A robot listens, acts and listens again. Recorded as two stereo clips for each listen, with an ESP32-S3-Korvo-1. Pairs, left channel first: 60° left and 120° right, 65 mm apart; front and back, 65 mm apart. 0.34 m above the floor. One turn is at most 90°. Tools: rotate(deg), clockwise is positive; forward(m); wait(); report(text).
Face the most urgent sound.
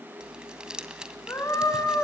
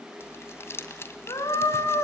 rotate(-15)
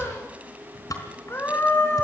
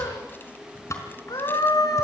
report("Facing the scream.")